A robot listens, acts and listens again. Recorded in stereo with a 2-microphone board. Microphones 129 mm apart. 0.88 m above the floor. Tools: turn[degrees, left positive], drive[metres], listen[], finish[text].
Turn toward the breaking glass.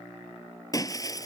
Thought: The breaking glass: about 30° left or 150° left.
Action: turn[30]
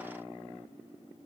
Action: listen[]
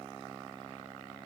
Action: finish[I heard breaking glass, but can't make it out now. It was about straight ahead or 120° left.]